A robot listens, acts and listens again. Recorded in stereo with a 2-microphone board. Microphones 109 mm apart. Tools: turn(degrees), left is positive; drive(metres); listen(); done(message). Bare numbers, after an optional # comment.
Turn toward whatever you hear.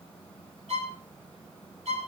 turn(-90)
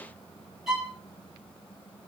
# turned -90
done("Facing the violin, over 4 m away.")